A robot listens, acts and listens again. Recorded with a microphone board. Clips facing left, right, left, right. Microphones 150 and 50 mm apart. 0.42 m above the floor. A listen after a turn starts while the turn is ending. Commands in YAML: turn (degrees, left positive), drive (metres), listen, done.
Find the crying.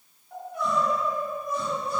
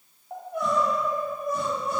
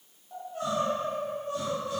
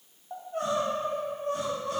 turn: -65
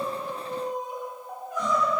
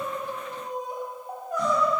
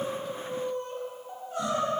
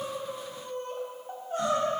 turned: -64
turn: -45
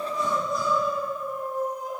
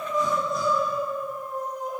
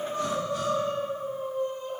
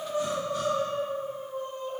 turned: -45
done: "Facing the crying."